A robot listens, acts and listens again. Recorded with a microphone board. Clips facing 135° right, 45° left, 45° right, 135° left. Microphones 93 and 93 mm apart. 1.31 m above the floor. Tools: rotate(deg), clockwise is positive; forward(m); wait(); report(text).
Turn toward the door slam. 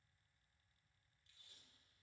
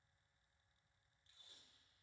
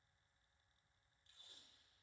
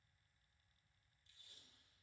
wait()
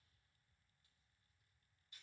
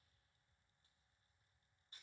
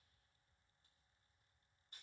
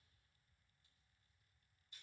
wait()
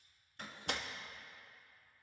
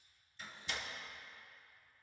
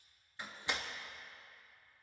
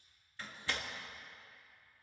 rotate(115)
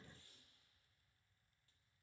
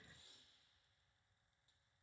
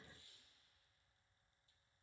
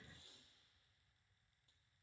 report("I heard a door slam from this way, but can't make it out now.")